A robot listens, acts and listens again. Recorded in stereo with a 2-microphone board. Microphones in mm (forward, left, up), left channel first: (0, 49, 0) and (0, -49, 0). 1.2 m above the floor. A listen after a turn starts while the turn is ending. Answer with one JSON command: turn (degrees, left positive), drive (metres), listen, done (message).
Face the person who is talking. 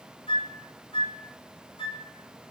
{"listen": true}
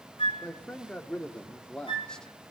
{"turn": 30}
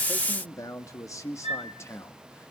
{"turn": 155}
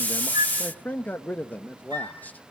{"turn": 15}
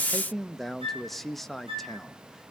{"done": "Facing the man speaking."}